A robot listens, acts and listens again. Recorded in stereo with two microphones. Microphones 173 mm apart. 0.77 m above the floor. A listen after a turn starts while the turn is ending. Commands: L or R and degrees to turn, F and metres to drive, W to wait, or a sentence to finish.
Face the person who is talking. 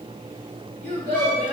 R90
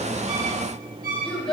Found it: a child speaking, straight ahead.